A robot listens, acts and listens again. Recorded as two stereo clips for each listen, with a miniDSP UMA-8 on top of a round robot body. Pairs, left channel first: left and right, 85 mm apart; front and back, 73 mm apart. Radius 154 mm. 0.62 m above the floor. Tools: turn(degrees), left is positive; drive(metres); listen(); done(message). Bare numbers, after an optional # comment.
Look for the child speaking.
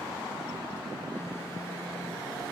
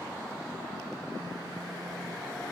listen()
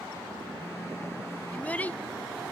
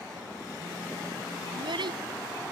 # The child speaking: 165° left.
turn(165)
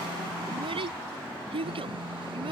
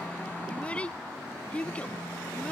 # The child speaking is now 75° right.
turn(-75)
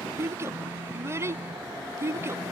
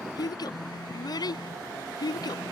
# The child speaking is now 30° right.
turn(-30)
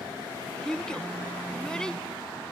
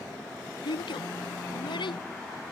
# The child speaking is now 10° left.
turn(10)
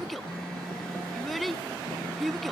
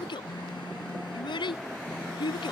done("Found it: a child speaking, straight ahead.")